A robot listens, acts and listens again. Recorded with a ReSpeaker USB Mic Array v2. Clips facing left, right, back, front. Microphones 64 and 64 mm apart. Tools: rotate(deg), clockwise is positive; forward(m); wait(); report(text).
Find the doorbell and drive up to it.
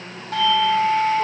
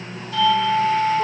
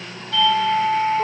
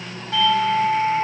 rotate(-75)
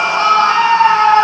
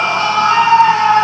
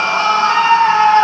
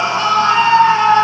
wait()
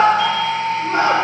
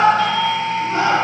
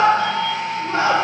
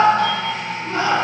rotate(-15)
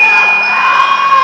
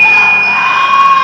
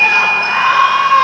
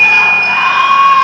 wait()
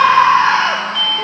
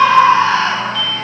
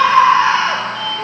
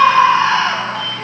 forward(1.0)
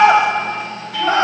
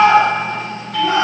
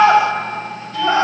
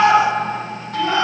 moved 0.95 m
forward(1.0)
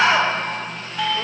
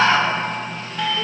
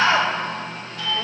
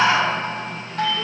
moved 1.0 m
forward(1.0)
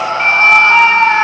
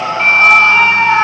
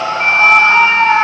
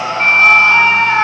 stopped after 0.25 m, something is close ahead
wait()
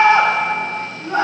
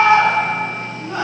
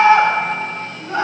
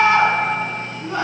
wait()
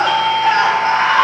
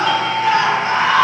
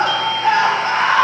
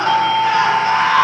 report("Arrived at the doorbell, straight ahead.")